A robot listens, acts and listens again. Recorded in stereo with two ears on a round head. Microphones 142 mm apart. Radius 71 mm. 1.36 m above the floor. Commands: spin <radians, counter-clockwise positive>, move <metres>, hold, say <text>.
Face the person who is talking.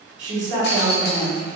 spin -1.57
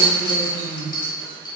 spin -0.17
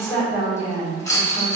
say Found it: a woman speaking, straight ahead.